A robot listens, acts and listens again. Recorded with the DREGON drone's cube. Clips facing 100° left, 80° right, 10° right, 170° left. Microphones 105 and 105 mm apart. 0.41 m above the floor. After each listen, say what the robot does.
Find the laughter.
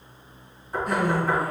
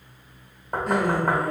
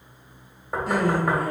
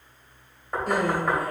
Turn 170° right.
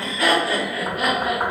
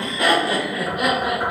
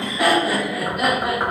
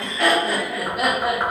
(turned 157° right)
Turn 120° right.
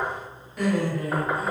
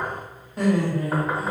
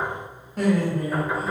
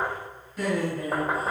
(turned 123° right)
Turn 35° right.
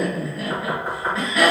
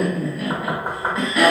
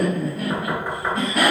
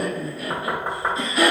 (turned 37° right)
Found it: laughter, straight ahead.